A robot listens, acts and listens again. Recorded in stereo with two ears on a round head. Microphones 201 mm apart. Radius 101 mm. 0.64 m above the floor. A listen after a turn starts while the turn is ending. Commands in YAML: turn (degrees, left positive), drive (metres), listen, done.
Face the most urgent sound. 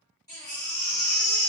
turn: 15
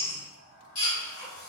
turn: 150
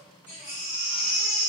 turn: -10
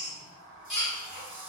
done: "Found it: a baby crying, straight ahead, 1 to 2 m away."